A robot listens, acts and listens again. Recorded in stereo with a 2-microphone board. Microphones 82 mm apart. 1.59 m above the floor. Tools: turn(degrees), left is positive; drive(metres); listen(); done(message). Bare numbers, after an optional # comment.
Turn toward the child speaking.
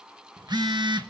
listen()
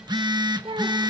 # The child speaking: about 65° right or 115° right.
turn(-65)
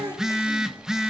listen()
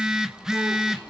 listen()
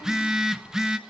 done("I heard a child speaking, but can't make it out now. It was about straight ahead or 50° right.")